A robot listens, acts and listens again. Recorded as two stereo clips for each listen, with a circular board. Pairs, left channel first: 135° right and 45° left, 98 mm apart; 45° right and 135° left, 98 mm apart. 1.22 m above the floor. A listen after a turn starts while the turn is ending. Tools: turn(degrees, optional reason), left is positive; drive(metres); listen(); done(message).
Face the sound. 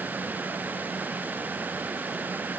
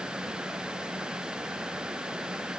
listen()
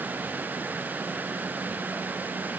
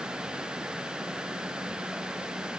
listen()
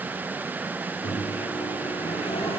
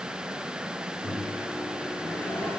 turn(degrees=-120, reason="The microwave: 120° right.")
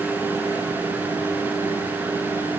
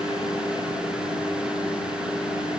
turn(degrees=-10, reason="The microwave is now 10° right.")
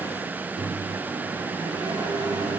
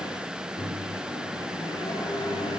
done("Found it: a microwave, straight ahead.")